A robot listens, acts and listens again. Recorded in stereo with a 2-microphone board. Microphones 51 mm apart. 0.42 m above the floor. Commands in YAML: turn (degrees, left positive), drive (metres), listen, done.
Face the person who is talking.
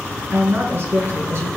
turn: -40
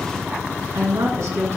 turn: -100
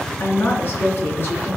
turn: 40
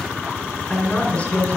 turn: 20
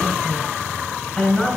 done: "Facing the woman speaking, over 4 m away."